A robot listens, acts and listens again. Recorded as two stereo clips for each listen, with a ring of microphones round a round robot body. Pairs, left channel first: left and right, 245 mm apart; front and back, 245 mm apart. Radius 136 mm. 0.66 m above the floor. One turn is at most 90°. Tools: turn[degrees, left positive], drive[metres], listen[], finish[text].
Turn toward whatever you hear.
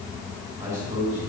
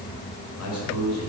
Action: finish[Found it: a man speaking, straight ahead, over 4 m away.]